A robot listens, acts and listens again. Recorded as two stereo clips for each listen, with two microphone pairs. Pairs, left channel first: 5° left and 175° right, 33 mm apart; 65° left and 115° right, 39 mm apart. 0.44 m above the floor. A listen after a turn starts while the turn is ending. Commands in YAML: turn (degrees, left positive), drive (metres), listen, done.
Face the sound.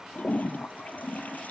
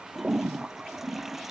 turn: -30
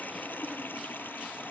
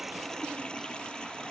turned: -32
done: "Found it: a toilet flushing, straight ahead."